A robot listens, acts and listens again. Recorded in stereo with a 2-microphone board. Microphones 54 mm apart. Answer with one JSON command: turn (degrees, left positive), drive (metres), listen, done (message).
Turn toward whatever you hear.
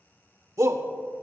{"turn": -70}
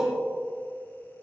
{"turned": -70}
{"turn": -15}
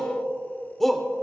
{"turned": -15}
{"done": "Found it: a shout, straight ahead."}